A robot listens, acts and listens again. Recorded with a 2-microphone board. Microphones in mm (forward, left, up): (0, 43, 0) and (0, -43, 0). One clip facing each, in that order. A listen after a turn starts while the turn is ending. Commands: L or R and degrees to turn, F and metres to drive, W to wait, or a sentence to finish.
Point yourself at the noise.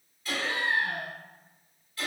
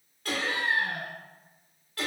R60
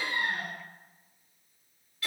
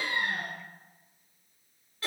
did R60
R40
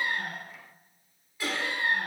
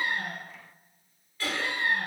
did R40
L15
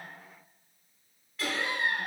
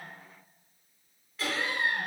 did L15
Facing the laughter.